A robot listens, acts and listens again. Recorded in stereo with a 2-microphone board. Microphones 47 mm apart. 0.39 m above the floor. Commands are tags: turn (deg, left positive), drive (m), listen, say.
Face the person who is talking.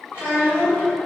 <turn deg="60"/>
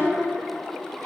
<listen/>
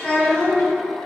<turn deg="25"/>
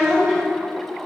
<say>Facing the child speaking.</say>